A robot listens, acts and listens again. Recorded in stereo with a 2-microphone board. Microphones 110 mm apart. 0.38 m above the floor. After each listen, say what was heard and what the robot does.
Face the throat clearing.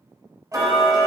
Keep listening.
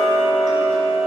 Keep listening.
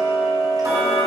I can't make out throat clearing to turn to.